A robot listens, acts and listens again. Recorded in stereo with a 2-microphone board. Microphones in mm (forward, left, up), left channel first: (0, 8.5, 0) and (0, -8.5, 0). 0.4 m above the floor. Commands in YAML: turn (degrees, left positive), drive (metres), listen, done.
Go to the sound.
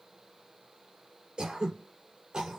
turn: -90
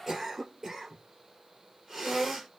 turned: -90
turn: -10
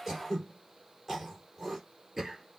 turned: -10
drive: 1.0
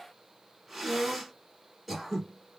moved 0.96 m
drive: 1.0
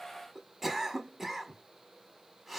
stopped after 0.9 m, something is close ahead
turn: -10
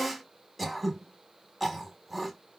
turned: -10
done: "Arrived at the throat clearing, straight ahead."